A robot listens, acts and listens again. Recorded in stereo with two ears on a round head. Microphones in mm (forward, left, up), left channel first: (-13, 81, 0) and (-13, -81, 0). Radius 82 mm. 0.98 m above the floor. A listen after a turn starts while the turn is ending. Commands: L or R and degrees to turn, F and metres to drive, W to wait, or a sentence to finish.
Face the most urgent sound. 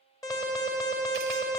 L20
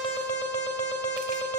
L140
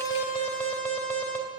L15
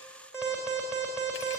Found it: an alarm, straight ahead.